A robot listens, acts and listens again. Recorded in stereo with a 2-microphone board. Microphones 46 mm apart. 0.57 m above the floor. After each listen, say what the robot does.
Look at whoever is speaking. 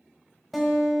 Keep listening.
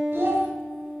Turn 60° right.
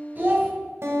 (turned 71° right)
Turn 45° right.
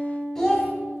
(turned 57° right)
Turn 10° left.
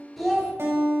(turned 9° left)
Found it: a child speaking, straight ahead.